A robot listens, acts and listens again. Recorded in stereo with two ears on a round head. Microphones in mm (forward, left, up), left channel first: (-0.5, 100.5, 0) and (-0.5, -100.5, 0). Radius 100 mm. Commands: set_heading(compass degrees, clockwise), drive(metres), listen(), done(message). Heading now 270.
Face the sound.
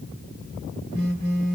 set_heading(315)
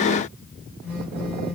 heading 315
set_heading(325)
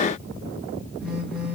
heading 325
done("Found it: a phone buzzing, straight ahead, 2 to 4 m away.")